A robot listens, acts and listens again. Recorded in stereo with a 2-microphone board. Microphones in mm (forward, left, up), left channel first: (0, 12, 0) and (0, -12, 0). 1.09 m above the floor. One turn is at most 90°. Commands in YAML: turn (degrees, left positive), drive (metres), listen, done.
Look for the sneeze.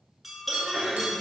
turn: 30
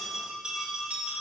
listen: true
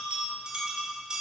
done: "I heard a sneeze, but can't make it out now. It was about 25° right or 145° left."